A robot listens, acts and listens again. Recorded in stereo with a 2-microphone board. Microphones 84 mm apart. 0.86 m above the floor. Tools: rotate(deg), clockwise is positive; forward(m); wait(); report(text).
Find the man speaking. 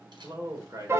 rotate(40)
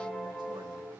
wait()
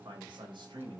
rotate(100)
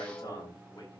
rotate(-45)
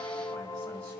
wait()
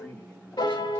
rotate(-15)
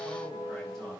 wait()
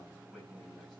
report("Facing the man speaking.")